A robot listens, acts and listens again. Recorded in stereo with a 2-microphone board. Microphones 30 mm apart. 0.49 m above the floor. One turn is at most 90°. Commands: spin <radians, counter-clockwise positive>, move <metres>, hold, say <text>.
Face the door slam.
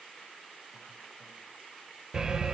hold
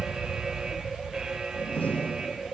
spin 1.57
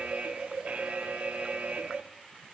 say I heard a door slam from this way, but can't make it out now.